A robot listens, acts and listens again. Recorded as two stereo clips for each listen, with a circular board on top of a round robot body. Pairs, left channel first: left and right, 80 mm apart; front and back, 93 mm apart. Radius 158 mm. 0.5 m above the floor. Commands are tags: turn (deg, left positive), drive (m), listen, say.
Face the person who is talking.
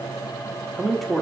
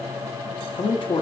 <say>Facing the man speaking.</say>